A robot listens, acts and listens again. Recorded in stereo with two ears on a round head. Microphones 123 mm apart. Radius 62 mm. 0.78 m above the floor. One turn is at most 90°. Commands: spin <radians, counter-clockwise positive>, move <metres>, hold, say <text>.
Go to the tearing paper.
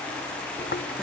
spin 1.31
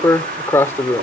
spin 0.35
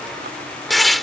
move 1.0
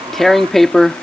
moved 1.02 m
move 1.0
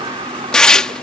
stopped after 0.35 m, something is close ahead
say Arrived at the tearing paper, straight ahead.